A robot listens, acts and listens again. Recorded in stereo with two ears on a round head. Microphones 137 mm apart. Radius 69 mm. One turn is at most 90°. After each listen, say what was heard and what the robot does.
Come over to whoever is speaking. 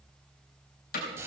Keep listening.
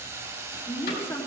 The woman speaking: about 20° left or 160° left. Turn 20° left.
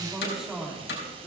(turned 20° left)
Drive 1.0 m forward.
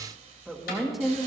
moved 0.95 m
Drive 1.0 m forward.
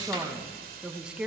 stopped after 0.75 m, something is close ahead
Arrived at the woman speaking, straight ahead.